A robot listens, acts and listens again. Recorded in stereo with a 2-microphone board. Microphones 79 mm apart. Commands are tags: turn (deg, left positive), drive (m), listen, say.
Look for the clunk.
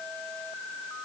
<listen/>
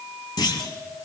<turn deg="65"/>
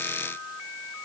<listen/>
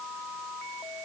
<say>I heard a clunk, but can't make it out now. It was about straight ahead or 50° left.</say>